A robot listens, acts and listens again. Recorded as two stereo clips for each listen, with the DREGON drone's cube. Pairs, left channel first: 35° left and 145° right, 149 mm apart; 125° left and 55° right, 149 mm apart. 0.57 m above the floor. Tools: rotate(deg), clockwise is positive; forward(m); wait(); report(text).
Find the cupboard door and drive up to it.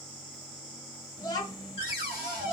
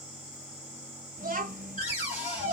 rotate(-75)
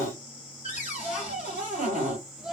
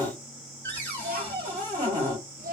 rotate(-50)
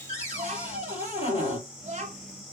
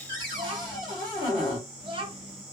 forward(1.0)
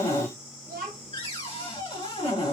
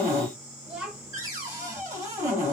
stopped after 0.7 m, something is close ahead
report("I am next to the cupboard door.")